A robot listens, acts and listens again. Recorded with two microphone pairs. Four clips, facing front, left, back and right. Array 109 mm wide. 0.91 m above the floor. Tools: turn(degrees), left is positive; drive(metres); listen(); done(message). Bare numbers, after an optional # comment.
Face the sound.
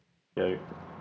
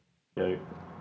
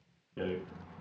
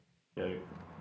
# The rattle: 25° left.
turn(25)
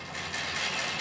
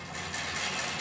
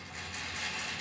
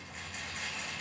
# The rattle is now 35° left.
turn(35)
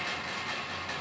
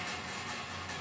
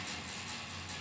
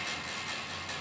# The rattle is now 10° right.
turn(-10)
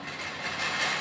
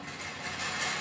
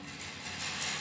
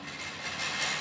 done("Found it: a rattle, straight ahead, under 1 m away.")